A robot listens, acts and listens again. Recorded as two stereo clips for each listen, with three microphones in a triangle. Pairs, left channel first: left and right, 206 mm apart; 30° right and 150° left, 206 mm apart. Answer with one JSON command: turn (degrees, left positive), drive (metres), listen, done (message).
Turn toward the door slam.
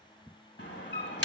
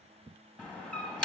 {"turn": 55}
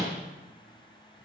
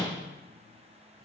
{"done": "Found it: a door slam, straight ahead, 1 to 2 m away."}